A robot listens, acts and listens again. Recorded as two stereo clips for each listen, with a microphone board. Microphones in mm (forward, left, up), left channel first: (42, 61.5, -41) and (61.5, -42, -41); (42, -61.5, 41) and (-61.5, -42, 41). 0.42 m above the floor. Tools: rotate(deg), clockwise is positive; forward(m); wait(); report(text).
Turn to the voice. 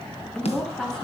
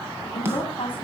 rotate(-20)
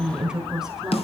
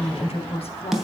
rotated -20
report("Found it: a woman speaking, straight ahead.")